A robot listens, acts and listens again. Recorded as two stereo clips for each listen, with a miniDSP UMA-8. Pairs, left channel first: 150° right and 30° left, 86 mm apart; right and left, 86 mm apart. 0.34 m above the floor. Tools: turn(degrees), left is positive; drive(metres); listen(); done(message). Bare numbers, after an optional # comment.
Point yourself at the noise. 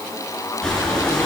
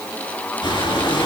# The breathing: 70° right.
turn(-70)
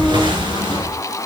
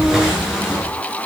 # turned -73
done("Facing the breathing.")